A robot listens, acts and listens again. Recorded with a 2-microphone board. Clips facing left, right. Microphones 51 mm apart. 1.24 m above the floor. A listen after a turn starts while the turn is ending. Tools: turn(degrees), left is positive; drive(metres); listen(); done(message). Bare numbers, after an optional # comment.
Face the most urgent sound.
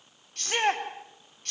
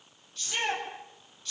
# The shout: about 55° left or 125° left.
turn(55)
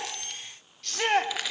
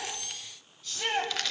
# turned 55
# So it is at 70° left.
turn(70)
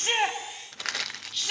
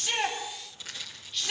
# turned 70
done("Found it: a shout, straight ahead, over 4 m away.")